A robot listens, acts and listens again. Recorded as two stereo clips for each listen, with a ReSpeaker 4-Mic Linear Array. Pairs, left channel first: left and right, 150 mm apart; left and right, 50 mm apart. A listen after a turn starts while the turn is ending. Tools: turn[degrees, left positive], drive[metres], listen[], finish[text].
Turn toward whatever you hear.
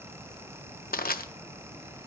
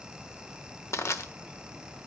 Action: turn[90]
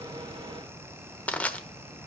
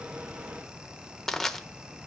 Thought: So it is at 10° left.
Action: turn[10]
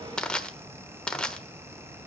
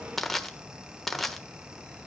Action: finish[Found it: crushing, straight ahead, 1 to 2 m away.]